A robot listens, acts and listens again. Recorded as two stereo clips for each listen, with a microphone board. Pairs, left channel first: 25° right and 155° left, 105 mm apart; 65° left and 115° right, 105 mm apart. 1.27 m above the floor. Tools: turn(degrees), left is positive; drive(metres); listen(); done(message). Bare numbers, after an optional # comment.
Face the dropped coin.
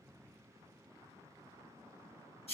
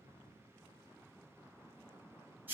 listen()
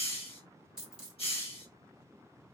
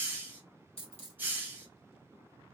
# The dropped coin: 75° left.
turn(75)
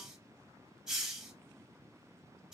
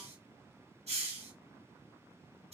done("I heard a dropped coin from this way, but can't make it out now.")